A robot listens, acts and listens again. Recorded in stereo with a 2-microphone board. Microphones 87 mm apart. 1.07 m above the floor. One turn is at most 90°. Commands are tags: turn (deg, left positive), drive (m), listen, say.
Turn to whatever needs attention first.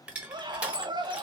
<turn deg="-55"/>
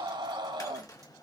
<turn deg="-65"/>
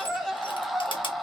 <say>Facing the scream.</say>